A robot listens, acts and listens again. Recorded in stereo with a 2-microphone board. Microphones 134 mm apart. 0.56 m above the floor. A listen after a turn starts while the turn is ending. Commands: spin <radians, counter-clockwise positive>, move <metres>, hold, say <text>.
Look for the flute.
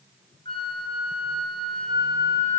spin 0.70
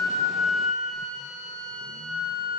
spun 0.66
say Facing the flute, over 4 m away.